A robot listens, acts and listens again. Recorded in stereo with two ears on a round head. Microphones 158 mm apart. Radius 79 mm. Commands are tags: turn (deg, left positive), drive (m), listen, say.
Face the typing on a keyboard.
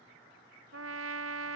<listen/>
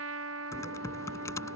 <turn deg="20"/>
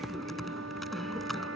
<say>Found it: typing on a keyboard, straight ahead.</say>